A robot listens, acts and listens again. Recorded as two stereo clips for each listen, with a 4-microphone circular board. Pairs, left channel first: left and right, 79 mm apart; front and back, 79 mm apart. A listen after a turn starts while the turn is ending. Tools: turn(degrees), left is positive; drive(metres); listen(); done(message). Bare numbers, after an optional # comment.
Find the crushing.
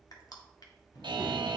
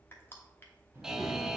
# The crushing: 60° left.
turn(60)
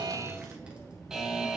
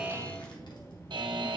listen()
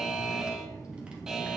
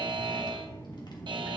listen()
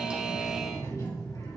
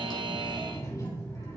done("I heard crushing from this way, but can't make it out now.")